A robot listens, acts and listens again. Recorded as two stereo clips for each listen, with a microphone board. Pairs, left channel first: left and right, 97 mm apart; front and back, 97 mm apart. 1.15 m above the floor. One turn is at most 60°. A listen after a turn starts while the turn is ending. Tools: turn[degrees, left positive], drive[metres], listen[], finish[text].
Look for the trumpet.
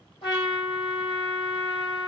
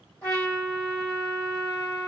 Thought: The trumpet: 70° left.
Action: turn[60]
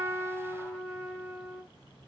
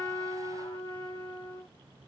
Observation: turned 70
Action: finish[Found it: a trumpet, straight ahead, 2 to 4 m away.]